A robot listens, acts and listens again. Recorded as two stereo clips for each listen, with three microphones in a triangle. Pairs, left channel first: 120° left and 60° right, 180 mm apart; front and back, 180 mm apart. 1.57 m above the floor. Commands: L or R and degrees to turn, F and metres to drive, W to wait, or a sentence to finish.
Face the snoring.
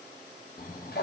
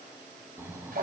L105
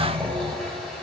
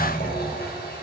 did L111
Facing the snoring.